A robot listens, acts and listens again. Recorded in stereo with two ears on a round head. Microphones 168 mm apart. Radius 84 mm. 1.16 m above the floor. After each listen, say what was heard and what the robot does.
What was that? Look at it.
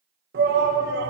The shout: about 60° right or 120° right. Turn 60° right.
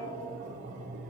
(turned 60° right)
So it is at 45° right. Turn 45° right.
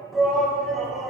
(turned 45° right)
Found it: a shout, straight ahead, 1 to 2 m away.